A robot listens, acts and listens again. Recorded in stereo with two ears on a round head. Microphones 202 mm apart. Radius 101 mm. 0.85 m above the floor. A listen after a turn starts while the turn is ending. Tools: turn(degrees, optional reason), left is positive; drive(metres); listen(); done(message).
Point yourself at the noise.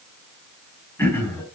turn(degrees=30)
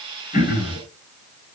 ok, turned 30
turn(degrees=140, reason="So it is at 140° left.")
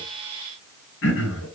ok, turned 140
turn(degrees=55, reason="The throat clearing is now 55° left.")
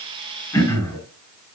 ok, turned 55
turn(degrees=15, reason="The throat clearing is now 15° left.")
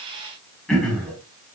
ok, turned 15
done("Found it: throat clearing, straight ahead, over 4 m away.")